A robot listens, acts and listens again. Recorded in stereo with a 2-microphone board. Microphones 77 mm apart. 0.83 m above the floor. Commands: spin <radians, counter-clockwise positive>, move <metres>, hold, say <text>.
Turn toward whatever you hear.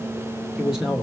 spin -0.52
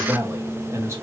spin -2.53
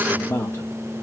spin 0.52
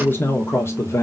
spin 0.61
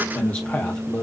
spin 0.52
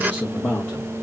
spin 0.26
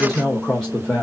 say Facing the man speaking, 1 to 2 m away.